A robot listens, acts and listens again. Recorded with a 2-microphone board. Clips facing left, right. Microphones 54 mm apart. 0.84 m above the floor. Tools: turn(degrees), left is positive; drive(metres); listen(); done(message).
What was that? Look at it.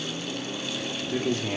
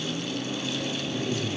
turn(degrees=65)
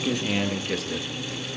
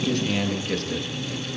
done("Facing the man speaking.")